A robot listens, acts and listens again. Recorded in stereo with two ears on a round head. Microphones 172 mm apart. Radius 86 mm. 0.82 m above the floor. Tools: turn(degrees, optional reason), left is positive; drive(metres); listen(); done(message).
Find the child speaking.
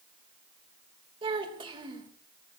turn(degrees=-25, reason="The child speaking: about 25° right or 155° right.")
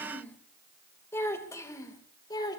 turn(degrees=20, reason="So it is at 20° left.")
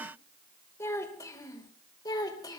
turn(degrees=20, reason="The child speaking is now 20° left.")
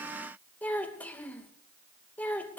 turn(degrees=10, reason="The child speaking is now 10° left.")
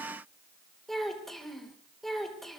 done("Facing the child speaking, 2 to 4 m away.")